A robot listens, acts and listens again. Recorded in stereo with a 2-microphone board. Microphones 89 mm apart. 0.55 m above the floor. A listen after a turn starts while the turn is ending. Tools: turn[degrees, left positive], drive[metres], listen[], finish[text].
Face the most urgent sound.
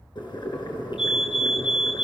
Action: turn[-30]
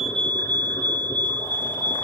Thought: So it is at 25° left.
Action: turn[25]
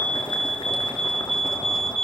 Action: finish[Found it: a fire alarm, straight ahead.]